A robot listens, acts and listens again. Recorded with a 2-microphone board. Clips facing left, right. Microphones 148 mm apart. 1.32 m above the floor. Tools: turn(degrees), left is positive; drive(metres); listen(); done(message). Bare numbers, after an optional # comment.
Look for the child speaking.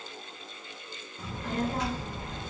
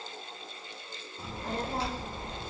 # The child speaking: about 30° right or 150° right.
turn(-30)
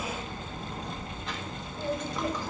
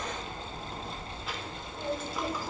done("Facing the child speaking, under 1 m away.")